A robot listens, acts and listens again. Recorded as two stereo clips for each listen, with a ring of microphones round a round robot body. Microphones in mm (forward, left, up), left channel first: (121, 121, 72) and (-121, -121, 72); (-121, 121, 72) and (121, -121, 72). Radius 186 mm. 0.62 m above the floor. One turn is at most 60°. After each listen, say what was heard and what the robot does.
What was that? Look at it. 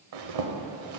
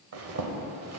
The zipper: 95° right. Turn 60° right.
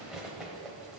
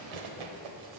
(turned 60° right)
The zipper is now 45° right. Turn 45° right.
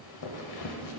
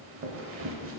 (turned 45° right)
The zipper is now 10° left. Turn 10° left.
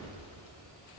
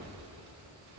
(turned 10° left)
Facing the zipper.